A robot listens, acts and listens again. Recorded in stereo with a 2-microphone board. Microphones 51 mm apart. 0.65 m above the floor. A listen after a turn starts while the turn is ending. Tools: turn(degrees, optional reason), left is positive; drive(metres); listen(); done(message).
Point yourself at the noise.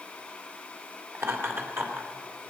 turn(degrees=-50, reason="The laughter: about 50° right or 130° right.")
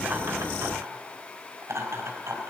turn(degrees=-75, reason="So it is at 75° right.")
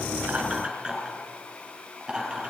turn(degrees=-15, reason="The laughter is now 15° right.")
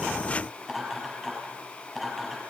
done("Facing the laughter.")